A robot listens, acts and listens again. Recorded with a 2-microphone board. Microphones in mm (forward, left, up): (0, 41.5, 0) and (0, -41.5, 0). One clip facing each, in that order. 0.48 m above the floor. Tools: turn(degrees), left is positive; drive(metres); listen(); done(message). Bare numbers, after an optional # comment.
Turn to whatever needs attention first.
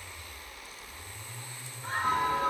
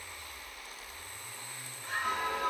# The scream: about 40° left or 140° left.
turn(40)
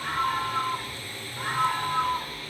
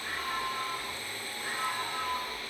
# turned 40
# So it is at 100° left.
turn(100)
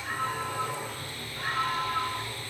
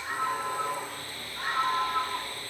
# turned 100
# The scream is now 20° right.
turn(-20)
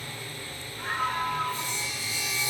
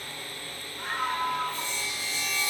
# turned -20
done("Found it: a scream, straight ahead, over 4 m away.")